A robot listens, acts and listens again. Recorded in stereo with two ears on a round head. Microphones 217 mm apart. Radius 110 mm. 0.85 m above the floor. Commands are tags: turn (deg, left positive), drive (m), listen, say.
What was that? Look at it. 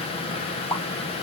<turn deg="30"/>
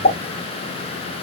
<turn deg="140"/>
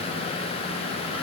<say>I heard a pop from this way, but can't make it out now.</say>